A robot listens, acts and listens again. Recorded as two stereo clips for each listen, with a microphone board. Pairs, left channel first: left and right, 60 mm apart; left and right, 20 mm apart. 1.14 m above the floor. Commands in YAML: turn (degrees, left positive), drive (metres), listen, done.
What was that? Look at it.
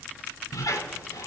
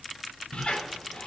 turn: 70
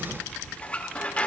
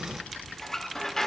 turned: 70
turn: 25
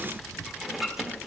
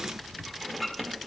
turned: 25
done: "Found it: a squeak, straight ahead, 1 to 2 m away."